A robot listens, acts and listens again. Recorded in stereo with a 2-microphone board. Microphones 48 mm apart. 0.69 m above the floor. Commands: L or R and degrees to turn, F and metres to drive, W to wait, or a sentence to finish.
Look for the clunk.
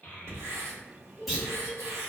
L30
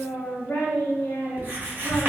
W
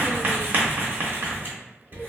I heard a clunk, but can't make it out now. It was about 30° right or 150° left.